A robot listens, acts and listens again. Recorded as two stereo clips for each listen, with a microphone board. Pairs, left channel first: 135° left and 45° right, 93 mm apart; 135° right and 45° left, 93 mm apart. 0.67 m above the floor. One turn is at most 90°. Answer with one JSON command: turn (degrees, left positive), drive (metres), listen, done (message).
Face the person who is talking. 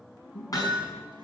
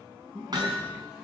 {"turn": 90}
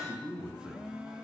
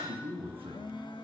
{"turn": 35}
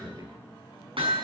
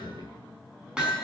{"done": "Found it: a man speaking, straight ahead."}